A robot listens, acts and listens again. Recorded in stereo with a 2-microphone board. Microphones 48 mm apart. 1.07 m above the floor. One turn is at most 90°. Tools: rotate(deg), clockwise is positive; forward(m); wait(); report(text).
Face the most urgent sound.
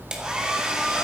wait()
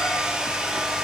wait()
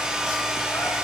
report("I can't make out anything urgent, only a hair dryer.")